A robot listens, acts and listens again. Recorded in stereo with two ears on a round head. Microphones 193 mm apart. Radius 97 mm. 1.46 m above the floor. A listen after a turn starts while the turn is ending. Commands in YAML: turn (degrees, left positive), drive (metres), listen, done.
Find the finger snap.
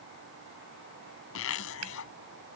turn: -90
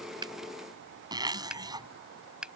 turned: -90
done: "Found it: a finger snap, straight ahead."